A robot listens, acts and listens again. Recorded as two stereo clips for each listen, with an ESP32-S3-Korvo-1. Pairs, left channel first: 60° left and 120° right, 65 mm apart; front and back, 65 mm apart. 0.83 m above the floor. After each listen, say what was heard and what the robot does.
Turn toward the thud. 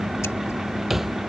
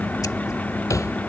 The thud: 35° right. Turn 35° right.
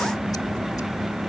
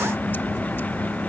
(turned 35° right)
I heard a thud from this way, but can't make it out now.